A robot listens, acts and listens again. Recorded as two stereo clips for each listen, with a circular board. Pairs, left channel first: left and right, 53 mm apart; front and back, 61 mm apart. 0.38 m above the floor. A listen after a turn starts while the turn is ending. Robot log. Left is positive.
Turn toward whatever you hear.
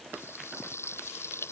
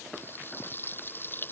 note: The frying: 55° left.
cmd yaw +55
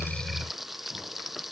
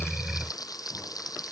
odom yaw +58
end: Found it: frying, straight ahead.